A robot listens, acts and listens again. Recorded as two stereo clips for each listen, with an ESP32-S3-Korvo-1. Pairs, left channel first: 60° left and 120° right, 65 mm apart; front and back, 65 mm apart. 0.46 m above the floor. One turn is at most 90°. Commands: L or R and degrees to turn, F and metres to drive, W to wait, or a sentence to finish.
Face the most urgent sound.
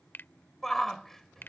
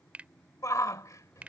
R25
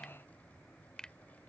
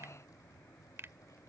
W
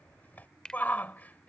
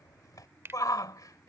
Facing the shout.